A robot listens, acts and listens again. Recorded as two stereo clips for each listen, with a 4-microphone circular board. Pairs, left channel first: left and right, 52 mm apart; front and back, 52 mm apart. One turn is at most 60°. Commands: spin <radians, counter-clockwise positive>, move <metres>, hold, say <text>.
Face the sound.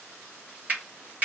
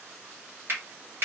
spin -1.05
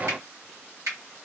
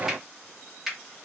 spin -1.05
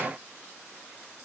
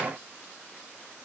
spin -0.52
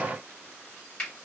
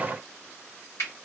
spin 0.44
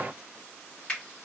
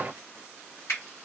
spin 0.35
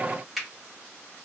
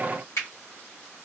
say Found it: a finger snap, straight ahead.